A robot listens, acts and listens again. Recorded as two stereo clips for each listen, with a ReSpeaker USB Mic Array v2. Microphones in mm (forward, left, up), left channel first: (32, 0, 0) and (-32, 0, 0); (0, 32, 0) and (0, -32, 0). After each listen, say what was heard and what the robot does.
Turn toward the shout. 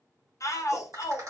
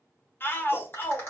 The shout: 35° left. Turn 35° left.
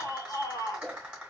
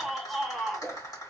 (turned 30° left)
Found it: a shout, straight ahead, 1 to 2 m away.